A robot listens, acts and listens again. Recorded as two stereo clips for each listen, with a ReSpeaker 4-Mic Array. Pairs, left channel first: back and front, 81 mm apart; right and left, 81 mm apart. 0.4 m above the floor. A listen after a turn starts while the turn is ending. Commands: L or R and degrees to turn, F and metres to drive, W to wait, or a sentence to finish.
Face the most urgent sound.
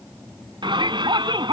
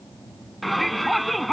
Found it: a shout, straight ahead.